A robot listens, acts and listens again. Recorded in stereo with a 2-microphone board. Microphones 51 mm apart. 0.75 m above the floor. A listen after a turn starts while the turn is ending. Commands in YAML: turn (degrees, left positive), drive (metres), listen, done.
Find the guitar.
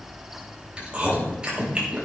listen: true
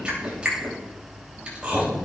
listen: true
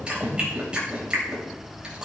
done: "I can't make out a guitar to turn to."